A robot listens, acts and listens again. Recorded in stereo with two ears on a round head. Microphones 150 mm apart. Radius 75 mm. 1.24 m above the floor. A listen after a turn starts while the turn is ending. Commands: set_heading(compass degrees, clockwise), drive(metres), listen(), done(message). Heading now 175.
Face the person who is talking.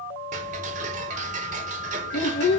set_heading(105)
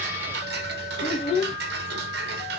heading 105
set_heading(70)
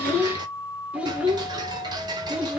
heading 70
set_heading(80)
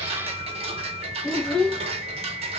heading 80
done("Facing the child speaking, 1 to 2 m away.")